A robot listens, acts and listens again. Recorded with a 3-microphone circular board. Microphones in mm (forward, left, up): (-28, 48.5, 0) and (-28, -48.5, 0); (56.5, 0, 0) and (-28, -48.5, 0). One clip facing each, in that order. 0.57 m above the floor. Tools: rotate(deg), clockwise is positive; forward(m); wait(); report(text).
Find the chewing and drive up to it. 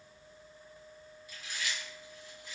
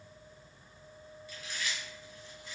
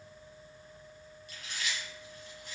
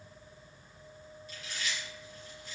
rotate(-15)
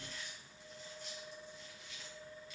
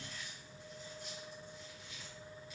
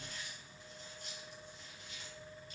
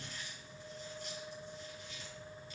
forward(1.0)
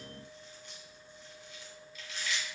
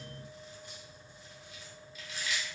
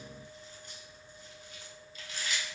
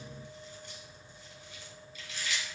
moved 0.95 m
forward(1.0)
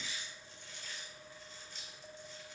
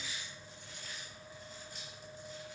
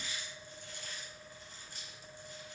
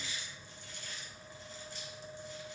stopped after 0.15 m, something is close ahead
report("I am next to the chewing.")